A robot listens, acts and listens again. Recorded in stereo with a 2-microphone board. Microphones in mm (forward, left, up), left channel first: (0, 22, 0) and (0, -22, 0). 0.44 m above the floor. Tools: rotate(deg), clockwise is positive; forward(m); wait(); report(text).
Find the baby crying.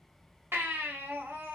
rotate(65)
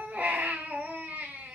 rotate(45)
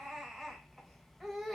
report("Found it: a baby crying, straight ahead.")